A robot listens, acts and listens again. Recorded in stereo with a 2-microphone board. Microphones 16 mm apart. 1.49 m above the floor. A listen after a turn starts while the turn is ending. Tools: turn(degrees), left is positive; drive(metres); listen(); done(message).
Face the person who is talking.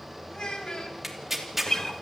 turn(degrees=70)
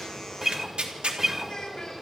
turn(degrees=40)
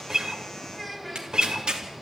done("Found it: a child speaking, straight ahead.")